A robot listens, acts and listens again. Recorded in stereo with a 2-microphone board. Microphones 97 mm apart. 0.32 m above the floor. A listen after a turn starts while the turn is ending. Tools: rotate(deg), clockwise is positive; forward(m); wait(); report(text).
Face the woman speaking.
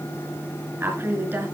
rotate(25)
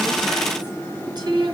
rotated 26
rotate(130)
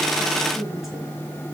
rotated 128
wait()
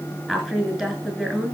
report("Found it: a woman speaking, straight ahead.")